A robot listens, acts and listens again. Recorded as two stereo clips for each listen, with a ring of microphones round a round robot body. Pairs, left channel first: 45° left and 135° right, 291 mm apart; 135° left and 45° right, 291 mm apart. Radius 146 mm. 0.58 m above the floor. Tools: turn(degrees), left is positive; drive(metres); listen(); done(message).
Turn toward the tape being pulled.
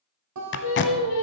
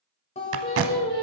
done("Found it: tape being pulled, straight ahead.")